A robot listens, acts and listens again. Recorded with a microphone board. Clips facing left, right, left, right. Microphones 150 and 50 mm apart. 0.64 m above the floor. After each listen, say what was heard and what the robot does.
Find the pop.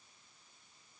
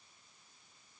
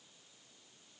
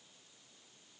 Keep listening.
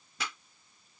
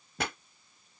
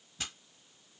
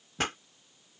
The pop: about 55° right or 125° right. Turn 55° right.
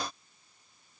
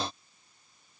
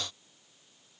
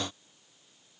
Keep listening.
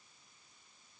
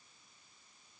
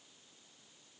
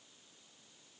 I heard a pop, but can't make it out now. It was about straight ahead or 70° right.